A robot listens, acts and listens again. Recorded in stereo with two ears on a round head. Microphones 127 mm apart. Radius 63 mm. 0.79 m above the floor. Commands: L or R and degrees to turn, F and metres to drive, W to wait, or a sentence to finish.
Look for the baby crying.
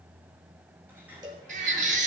R60
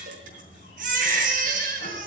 R60
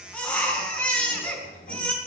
L10
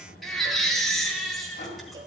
Facing the baby crying, over 4 m away.